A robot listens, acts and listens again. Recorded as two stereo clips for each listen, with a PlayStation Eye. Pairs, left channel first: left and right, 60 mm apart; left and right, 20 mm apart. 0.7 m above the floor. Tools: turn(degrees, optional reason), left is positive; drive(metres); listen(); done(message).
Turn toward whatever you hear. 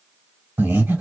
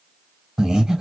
turn(degrees=-30, reason="The breathing: about 30° right or 150° right.")
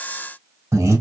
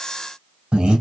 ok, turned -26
turn(degrees=-125, reason="So it is at 125° right.")
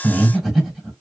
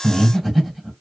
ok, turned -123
done("Found it: breathing, straight ahead.")